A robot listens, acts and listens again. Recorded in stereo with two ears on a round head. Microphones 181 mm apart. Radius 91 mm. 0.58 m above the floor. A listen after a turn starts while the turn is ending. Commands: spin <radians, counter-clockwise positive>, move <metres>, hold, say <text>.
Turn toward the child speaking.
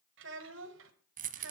spin -1.13
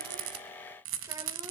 hold
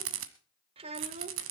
spin -0.61
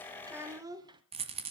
spin -0.44
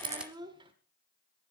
spin -0.44
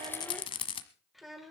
say Found it: a child speaking, straight ahead, 1 to 2 m away.